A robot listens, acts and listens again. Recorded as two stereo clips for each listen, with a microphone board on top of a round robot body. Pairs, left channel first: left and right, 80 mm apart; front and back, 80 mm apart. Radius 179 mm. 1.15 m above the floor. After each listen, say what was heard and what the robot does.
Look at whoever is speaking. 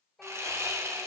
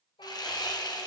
Found it: a child speaking, straight ahead, over 4 m away.